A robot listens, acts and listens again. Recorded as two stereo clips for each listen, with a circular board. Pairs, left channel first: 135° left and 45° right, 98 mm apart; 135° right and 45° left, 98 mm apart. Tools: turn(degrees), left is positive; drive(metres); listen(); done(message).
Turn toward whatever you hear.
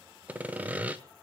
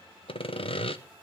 turn(degrees=-120)
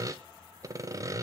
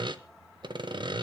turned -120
turn(degrees=10)
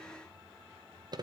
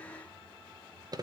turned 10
done("Facing the sawing, 1 to 2 m away.")